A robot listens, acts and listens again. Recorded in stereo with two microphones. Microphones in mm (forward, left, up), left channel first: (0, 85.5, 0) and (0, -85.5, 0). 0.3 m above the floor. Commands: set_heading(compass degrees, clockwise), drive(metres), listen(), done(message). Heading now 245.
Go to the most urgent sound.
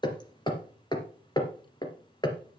listen()
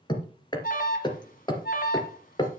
set_heading(190)
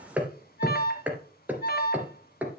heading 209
set_heading(129)
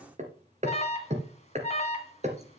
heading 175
set_heading(130)
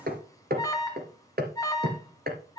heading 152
set_heading(132)
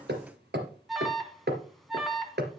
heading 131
drive(1.0)
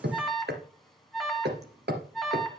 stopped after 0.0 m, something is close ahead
done("Blocked. The alarm is further on, straight ahead.")